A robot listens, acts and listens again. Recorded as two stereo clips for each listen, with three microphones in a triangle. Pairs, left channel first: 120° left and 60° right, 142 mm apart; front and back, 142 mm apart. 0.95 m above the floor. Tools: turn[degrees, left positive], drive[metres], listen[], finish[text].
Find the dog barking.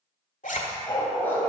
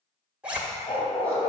Thought: The dog barking: 45° left.
Action: turn[45]
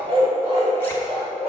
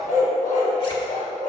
Thought: The dog barking is now 20° right.
Action: turn[-20]
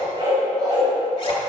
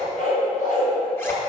Action: finish[Found it: a dog barking, straight ahead, 2 to 4 m away.]